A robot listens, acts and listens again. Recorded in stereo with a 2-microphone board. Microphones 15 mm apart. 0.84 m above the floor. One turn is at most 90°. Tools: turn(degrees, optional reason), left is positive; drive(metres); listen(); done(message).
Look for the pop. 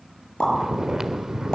turn(degrees=90)
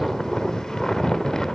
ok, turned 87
done("Facing where the pop came from. I can't hear it now.")